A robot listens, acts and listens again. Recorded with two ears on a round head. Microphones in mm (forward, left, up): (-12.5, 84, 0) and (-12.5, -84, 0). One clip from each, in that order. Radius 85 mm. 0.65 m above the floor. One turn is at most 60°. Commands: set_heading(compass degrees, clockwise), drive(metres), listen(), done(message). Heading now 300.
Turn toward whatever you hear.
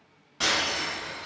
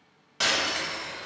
set_heading(335)
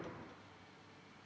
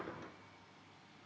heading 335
listen()
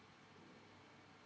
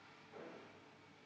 done("I heard breaking glass, but can't make it out now. It was about straight ahead or 110° right.")